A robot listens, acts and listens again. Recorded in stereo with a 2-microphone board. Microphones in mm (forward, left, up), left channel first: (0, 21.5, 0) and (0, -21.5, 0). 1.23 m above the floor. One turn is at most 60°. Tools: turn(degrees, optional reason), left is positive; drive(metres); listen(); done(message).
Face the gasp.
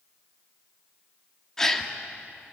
turn(degrees=30)
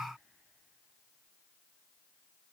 listen()
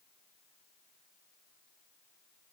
done("I heard a gasp, but can't make it out now. It was about 20° right or 140° left.")